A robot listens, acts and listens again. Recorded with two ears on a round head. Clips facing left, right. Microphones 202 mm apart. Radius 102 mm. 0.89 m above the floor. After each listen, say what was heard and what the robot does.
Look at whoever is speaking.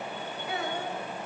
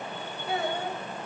The child speaking: about 30° right or 150° right. Turn 30° right.
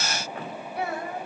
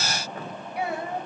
So it is at 15° right. Turn 15° right.
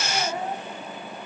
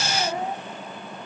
The child speaking is now 10° right. Turn 10° right.
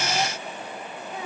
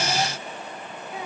The child speaking is now 10° right. Turn 10° right.
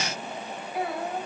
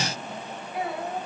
Found it: a child speaking, straight ahead.